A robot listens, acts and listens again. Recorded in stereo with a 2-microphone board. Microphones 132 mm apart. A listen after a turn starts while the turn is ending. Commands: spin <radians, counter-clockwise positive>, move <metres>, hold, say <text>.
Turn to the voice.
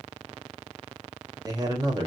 spin -0.52
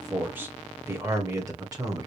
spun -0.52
spin -0.52
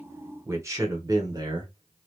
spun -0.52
spin -0.61
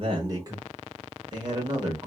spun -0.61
spin -0.61
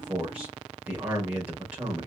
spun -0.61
spin -0.17
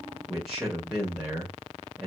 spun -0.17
say Found it: a man speaking, straight ahead, 1 to 2 m away.